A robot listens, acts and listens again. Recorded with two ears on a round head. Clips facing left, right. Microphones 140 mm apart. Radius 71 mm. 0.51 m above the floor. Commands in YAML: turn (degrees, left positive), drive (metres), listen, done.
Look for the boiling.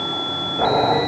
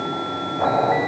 turn: 55
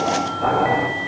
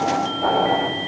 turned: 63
done: "Found it: boiling, straight ahead."